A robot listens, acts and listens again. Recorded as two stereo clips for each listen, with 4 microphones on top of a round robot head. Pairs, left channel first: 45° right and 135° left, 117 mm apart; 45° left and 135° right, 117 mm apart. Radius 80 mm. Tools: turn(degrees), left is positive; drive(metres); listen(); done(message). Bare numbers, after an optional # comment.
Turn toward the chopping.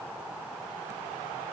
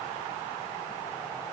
listen()
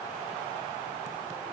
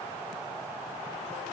listen()
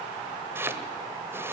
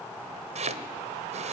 # The chopping: 155° right.
turn(-155)
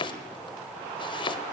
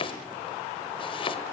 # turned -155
done("Facing the chopping.")